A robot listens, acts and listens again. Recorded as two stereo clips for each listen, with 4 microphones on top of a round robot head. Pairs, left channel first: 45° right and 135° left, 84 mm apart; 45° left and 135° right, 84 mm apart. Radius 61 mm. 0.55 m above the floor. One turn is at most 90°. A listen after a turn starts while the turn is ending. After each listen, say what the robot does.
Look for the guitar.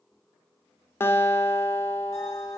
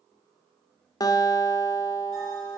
Turn 10° left.
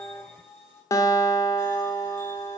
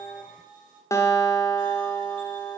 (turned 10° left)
Found it: a guitar, straight ahead.